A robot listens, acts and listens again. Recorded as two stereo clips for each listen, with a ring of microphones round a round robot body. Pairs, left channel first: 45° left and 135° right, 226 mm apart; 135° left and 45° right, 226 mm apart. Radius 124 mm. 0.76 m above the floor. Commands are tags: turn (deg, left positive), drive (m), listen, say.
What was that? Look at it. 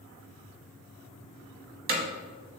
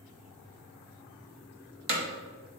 <turn deg="-85"/>
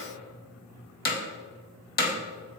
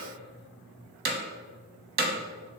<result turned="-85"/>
<say>Facing the hammering.</say>